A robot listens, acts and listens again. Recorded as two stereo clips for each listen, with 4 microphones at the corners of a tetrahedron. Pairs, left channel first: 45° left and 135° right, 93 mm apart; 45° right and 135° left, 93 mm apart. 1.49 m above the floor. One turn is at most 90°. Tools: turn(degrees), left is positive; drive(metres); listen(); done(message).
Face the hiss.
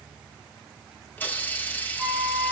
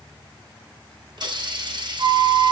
turn(degrees=90)
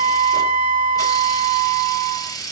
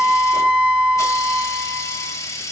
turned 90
done("Facing the hiss, 1 to 2 m away.")